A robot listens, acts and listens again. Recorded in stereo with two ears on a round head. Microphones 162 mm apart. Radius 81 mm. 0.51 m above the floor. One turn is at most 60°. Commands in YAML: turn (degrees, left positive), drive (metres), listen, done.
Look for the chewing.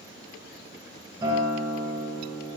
listen: true
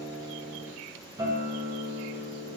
listen: true
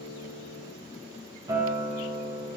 done: "I can't make out chewing to turn to."